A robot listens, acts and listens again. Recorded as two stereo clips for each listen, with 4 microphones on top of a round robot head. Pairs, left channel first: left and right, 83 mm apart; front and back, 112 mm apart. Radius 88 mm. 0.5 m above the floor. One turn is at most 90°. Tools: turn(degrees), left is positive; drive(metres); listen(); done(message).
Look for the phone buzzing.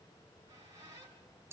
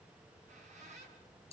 listen()
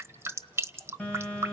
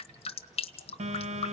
turn(degrees=90)
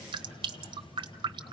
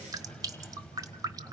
turn(degrees=85)
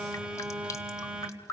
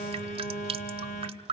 turn(degrees=-10)
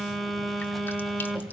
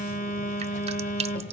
done("Found it: a phone buzzing, straight ahead.")